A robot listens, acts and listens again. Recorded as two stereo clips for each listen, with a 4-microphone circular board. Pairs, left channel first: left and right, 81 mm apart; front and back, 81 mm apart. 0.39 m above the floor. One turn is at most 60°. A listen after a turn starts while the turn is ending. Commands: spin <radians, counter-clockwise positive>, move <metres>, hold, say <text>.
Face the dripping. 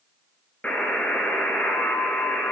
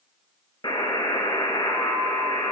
hold
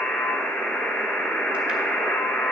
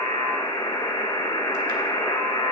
hold
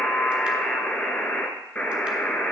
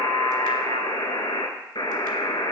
say I can't make out dripping to turn to.